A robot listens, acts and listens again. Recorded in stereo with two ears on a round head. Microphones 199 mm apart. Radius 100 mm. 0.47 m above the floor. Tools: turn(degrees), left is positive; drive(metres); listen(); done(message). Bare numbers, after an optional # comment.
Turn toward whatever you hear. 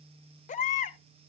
# The baby crying: about 35° left or 145° left.
turn(35)
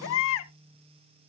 # So it is at 110° left.
turn(110)
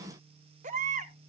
# The baby crying is now 35° right.
turn(-35)
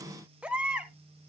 done("Facing the baby crying.")